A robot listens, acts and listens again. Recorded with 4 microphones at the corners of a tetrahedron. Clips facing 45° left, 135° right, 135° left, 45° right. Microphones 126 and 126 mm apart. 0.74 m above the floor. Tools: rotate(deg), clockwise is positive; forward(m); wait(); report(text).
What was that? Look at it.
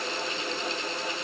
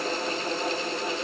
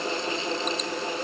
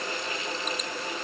wait()
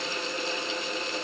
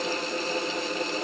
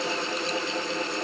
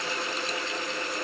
wait()
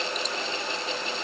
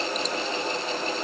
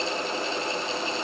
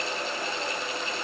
report("I can't make out anything.")